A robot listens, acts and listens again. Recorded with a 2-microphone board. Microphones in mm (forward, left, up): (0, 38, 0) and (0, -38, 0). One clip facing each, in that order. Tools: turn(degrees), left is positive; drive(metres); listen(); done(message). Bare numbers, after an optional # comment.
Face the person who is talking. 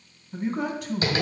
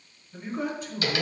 # The man speaking: about 70° left or 110° left.
turn(70)
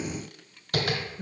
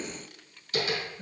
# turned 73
# So it is at 25° left.
turn(25)
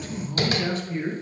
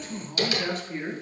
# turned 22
done("Found it: a man speaking, straight ahead, 2 to 4 m away.")